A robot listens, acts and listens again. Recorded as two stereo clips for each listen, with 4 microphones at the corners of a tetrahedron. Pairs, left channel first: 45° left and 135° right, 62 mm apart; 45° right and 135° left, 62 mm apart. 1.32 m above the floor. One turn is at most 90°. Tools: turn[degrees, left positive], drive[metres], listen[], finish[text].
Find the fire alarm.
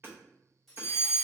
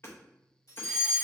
Thought: The fire alarm: 10° right.
Action: turn[-10]
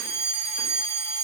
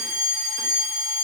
Action: finish[Facing the fire alarm, 1 to 2 m away.]